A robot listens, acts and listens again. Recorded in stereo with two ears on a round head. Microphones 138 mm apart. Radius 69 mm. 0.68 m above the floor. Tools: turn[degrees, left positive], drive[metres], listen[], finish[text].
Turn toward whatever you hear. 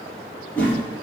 Action: turn[30]
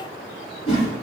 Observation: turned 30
Thought: So it is at 135° left.
Action: turn[135]
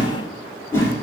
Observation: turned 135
Thought: The whoosh is now 15° left.
Action: turn[15]
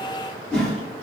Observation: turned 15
Action: finish[Found it: a whoosh, straight ahead.]